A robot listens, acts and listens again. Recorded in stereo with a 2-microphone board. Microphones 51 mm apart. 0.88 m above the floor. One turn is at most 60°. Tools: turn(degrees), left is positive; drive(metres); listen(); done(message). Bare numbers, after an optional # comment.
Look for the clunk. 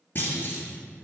# The clunk: about 35° left or 145° left.
turn(35)
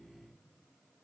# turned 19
listen()
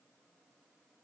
done("I heard a clunk, but can't make it out now. It was about 15° left or 125° left.")